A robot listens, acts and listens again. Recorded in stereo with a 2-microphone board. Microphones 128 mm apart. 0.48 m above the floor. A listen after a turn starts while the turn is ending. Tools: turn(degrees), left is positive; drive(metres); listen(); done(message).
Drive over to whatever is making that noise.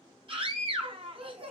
turn(degrees=-50)
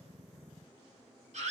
turn(degrees=-80)
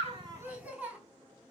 turn(degrees=-10)
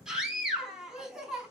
drive(metres=1.0)
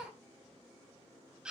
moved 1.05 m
drive(metres=1.0)
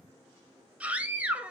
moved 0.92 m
turn(degrees=-10)
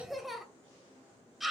drive(metres=1.0)
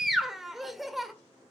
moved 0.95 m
drive(metres=1.0)
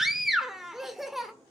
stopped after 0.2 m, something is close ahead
done("I am next to the scream.")